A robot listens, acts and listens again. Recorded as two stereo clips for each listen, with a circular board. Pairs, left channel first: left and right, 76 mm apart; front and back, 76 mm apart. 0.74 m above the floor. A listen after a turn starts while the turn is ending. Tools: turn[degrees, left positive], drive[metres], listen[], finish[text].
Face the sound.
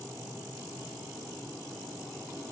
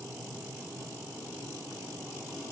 Action: listen[]
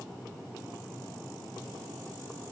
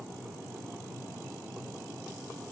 Action: listen[]
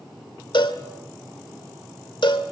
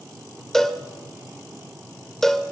Thought: The cowbell: 85° left.
Action: turn[85]
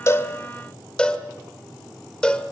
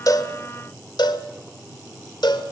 Thought: The cowbell is now 10° left.
Action: turn[10]
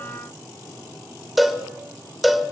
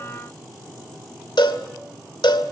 Action: finish[Found it: a cowbell, straight ahead.]